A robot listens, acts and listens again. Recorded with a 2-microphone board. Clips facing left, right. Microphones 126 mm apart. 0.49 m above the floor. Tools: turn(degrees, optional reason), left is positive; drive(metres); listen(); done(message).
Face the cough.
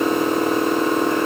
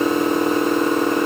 listen()
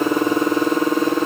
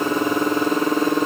listen()
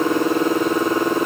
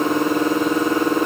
done("I can't make out a cough to turn to.")